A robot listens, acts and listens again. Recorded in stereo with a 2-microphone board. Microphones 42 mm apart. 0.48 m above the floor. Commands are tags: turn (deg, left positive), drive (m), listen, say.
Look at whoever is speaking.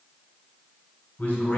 <turn deg="30"/>
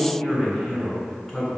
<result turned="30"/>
<say>Facing the man speaking.</say>